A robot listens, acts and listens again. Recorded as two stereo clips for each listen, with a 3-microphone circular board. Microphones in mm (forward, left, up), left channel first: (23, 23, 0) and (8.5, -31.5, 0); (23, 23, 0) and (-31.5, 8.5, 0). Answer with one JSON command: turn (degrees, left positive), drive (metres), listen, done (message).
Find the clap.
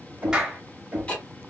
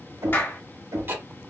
{"turn": -30}
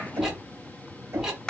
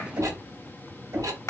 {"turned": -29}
{"done": "Found it: a clap, straight ahead."}